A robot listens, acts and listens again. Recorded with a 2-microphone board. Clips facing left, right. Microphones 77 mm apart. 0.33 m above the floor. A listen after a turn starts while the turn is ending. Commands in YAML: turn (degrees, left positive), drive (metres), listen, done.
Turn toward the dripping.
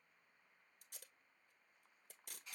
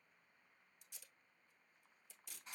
listen: true
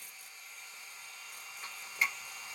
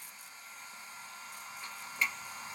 turn: 30
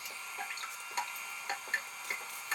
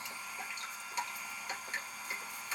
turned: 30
turn: 135
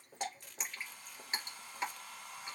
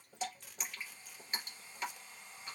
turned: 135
turn: 35
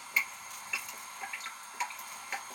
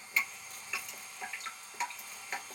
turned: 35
done: "Facing the dripping, 2 to 4 m away."